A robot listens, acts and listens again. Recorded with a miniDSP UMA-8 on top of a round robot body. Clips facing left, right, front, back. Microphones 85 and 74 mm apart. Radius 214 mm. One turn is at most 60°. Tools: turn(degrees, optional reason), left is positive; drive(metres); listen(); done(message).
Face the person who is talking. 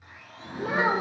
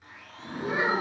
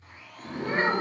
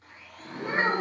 turn(degrees=60, reason="The child speaking: 110° left.")
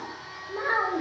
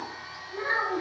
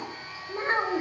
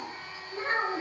turn(degrees=55, reason="The child speaking is now 55° left.")
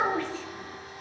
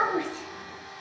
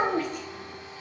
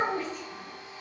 turn(degrees=-20, reason="The child speaking is now 20° right.")
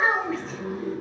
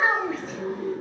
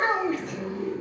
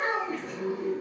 done("Facing the child speaking, under 1 m away.")